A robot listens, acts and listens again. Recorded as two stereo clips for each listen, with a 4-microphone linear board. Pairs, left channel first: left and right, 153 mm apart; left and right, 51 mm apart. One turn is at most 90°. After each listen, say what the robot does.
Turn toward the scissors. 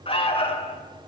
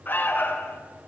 Keep listening.
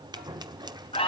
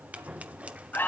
Turn 25° right.
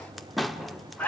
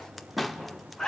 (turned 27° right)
Found it: scissors, straight ahead.